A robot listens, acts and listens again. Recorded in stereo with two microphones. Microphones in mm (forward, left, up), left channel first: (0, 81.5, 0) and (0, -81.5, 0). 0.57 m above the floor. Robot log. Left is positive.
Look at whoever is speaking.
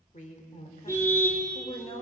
note: The woman speaking: about 35° left or 145° left.
cmd yaw +35
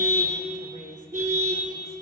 cmd idle
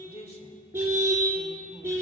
note: The woman speaking: about 40° left or 140° left.
cmd yaw +40
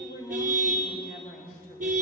note: So it is at 125° left.
cmd yaw +125
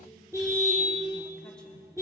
cmd idle
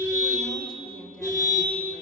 end: Found it: a woman speaking, straight ahead.